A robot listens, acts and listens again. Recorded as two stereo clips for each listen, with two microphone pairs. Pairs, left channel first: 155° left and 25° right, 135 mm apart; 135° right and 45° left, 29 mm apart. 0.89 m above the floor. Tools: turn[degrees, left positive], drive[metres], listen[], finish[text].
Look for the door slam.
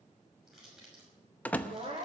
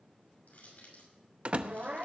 Thought: The door slam: 80° left.
Action: turn[80]
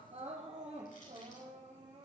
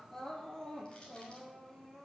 Action: finish[I heard a door slam from this way, but can't make it out now.]